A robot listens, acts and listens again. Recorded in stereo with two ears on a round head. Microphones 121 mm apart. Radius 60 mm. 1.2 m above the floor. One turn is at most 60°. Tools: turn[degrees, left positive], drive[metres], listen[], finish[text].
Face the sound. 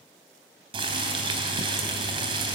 Thought: The boiling: about 35° right or 145° right.
Action: turn[-35]
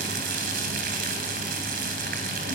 Thought: So it is at 110° right.
Action: turn[-60]
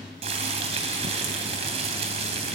Thought: The boiling is now 45° right.
Action: turn[-45]
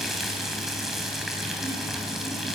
Action: finish[Facing the boiling, 2 to 4 m away.]